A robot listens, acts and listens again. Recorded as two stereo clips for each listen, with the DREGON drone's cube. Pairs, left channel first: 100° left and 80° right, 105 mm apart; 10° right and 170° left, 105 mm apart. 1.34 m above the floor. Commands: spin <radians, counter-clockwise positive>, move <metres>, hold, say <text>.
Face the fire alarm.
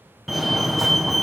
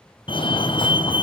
spin 0.17
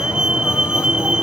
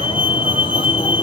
say Found it: a fire alarm, straight ahead.